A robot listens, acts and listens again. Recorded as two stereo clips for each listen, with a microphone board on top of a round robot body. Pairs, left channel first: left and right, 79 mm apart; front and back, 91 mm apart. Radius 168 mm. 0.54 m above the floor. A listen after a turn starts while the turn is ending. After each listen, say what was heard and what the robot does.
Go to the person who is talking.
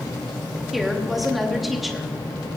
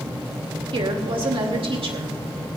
The woman speaking: straight behind. Turn 180° left.
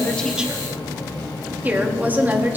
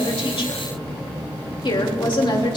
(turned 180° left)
The woman speaking is now 25° right. Turn 25° right.
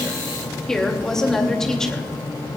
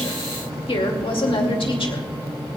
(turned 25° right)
Drive 1.0 m forward.
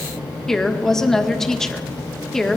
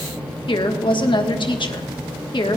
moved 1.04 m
Drive 1.0 m forward.
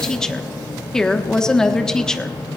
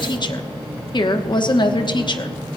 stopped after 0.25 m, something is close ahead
The woman speaking is now 10° left. Turn 10° left.
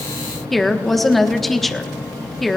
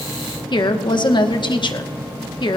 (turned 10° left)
I am next to the woman speaking.